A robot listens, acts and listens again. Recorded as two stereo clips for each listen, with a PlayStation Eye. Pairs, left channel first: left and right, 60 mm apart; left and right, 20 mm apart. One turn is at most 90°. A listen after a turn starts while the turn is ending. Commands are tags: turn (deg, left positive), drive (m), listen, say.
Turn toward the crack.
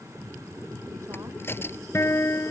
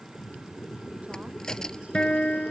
<turn deg="40"/>
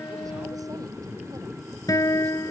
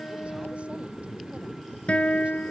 <listen/>
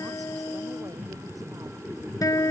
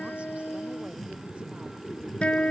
<say>I heard a crack, but can't make it out now. It was about straight ahead or 100° left.</say>